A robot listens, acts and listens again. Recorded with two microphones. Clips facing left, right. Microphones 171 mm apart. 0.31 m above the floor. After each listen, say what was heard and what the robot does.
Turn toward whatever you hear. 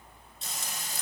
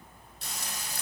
The frying: about 65° right or 115° right. Turn 65° right.
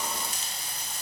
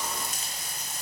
So it is at 50° right. Turn 50° right.
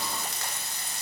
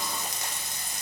The frying is now 20° right. Turn 20° right.
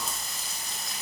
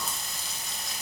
Facing the frying, under 1 m away.